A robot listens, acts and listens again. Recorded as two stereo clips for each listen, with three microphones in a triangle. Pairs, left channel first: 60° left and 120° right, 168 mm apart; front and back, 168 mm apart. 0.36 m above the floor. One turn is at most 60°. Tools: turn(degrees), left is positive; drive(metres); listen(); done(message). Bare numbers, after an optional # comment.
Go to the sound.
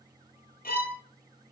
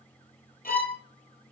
# The violin: 30° left.
turn(30)
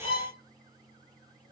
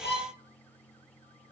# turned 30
drive(1.0)
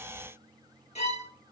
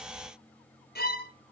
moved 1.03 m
# The violin is now 15° left.
turn(15)
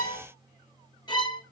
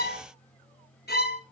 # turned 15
drive(1.0)
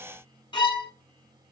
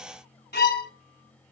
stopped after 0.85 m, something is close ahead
done("Arrived at the violin, straight ahead.")